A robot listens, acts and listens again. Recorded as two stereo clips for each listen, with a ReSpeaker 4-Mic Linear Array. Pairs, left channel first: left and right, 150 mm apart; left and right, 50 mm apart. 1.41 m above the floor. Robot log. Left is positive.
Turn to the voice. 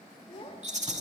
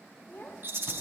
note: The child speaking: about 40° left or 140° left.
cmd yaw +40
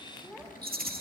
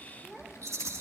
end: Found it: a child speaking, straight ahead.